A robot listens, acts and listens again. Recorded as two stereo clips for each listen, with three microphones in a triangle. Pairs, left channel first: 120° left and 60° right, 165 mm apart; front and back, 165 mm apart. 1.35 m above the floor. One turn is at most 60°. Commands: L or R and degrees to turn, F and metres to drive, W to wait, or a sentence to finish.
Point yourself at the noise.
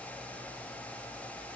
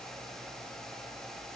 W
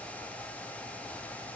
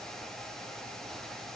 W
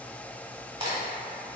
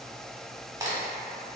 R60
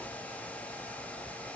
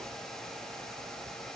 R50
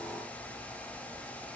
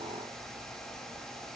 Facing where the crack came from. I can't hear it now.